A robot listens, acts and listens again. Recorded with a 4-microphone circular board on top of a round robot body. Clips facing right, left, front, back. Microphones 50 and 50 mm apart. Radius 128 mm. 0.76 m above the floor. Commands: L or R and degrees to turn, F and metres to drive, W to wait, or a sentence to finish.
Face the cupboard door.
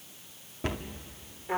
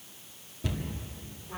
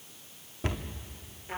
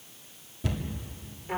R45
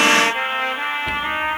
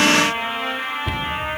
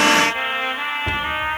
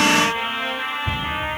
W
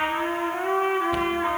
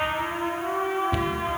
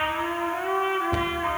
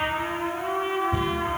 W
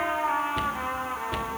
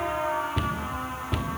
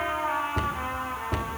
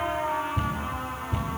Facing the cupboard door.